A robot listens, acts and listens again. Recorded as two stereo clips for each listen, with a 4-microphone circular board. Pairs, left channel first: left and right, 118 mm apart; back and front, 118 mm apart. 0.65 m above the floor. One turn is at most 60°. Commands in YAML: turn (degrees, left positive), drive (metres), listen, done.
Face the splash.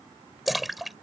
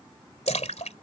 turn: 60
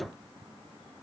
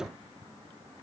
turn: 60
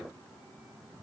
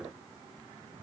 turn: 60
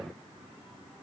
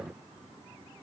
done: "Facing where the splash came from. I can't hear it now."